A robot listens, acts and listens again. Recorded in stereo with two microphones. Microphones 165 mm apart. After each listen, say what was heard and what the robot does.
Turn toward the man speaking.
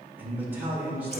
Turn 30° right.
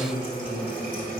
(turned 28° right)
So it is at 15° left. Turn 15° left.
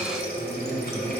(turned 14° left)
Keep listening.
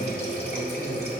Keep listening.
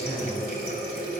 Facing where the man speaking came from. I can't hear it now.